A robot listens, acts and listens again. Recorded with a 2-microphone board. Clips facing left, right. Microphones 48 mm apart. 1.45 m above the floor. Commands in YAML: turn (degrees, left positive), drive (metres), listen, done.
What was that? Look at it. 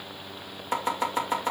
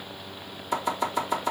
turn: 35
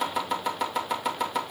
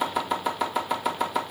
done: "Found it: chopping, straight ahead, 2 to 4 m away."